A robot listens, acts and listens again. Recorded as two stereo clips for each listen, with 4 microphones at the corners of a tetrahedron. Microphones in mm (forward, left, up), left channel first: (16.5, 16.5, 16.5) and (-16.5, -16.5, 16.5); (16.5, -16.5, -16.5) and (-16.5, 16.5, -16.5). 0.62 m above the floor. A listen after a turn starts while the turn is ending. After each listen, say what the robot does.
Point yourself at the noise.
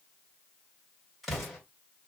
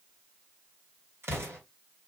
Turn 135° left.
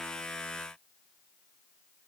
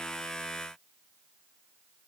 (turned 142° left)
Turn 10° right.
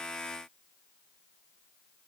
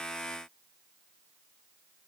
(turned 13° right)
Facing where the explosion came from. I can't hear it now.